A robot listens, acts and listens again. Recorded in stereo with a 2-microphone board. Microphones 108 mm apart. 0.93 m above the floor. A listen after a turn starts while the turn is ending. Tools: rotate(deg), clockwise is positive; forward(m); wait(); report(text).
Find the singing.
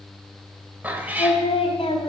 rotate(-90)
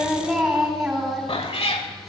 report("Found it: singing, straight ahead, 2 to 4 m away.")